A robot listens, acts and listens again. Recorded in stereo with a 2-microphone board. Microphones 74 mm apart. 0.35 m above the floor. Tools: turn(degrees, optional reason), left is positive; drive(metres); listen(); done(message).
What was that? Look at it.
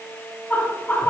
turn(degrees=20, reason="The laughter: about 20° left or 160° left.")
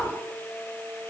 listen()
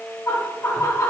turn(degrees=140, reason="So it is at 140° left.")
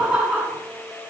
done("Found it: laughter, straight ahead, over 4 m away.")